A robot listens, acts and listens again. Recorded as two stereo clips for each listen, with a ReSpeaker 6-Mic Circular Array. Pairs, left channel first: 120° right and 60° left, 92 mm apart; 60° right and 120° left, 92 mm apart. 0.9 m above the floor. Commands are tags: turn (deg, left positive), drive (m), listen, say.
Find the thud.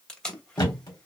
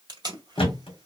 <turn deg="-80"/>
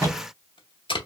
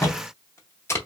<say>Facing the thud, 1 to 2 m away.</say>